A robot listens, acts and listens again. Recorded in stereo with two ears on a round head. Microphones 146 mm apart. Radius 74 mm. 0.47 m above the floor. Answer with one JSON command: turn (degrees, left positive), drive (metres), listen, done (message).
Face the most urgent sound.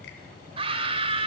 {"turn": -35}
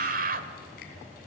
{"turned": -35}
{"turn": -100}
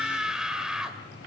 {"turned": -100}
{"done": "Found it: a scream, straight ahead, 2 to 4 m away."}